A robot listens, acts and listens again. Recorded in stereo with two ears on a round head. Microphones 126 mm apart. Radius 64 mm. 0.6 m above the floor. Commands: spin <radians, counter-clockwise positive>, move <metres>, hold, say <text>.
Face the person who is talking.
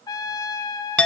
hold
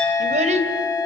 spin -0.87
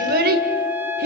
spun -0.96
spin -1.22
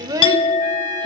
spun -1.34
spin -0.44
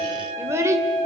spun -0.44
spin -0.35
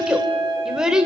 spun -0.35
say Facing the child speaking.